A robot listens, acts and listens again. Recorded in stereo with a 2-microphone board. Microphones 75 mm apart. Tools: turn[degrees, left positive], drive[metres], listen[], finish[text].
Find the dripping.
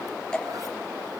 Action: turn[30]
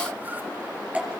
Thought: So it is at 20° right.
Action: turn[-20]
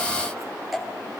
Action: finish[Found it: dripping, straight ahead.]